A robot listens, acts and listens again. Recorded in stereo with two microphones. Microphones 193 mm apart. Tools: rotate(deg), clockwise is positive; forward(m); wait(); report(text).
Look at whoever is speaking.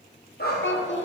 rotate(-90)
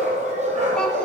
wait()
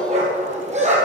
wait()
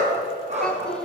report("Facing the child speaking.")